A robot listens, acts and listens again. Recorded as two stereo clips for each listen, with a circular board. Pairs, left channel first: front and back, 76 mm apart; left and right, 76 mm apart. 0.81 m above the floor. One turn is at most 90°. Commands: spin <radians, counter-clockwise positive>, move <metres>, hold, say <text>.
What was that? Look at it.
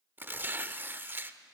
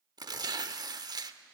spin -1.57
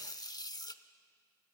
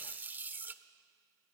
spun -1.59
spin -0.44
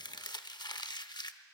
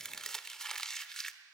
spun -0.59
say Facing the tearing paper.